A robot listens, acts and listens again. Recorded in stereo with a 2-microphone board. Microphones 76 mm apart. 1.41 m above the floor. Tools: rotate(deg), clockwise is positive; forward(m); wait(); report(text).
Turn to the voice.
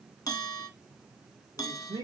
rotate(55)
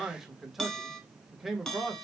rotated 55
report("Found it: a man speaking, straight ahead.")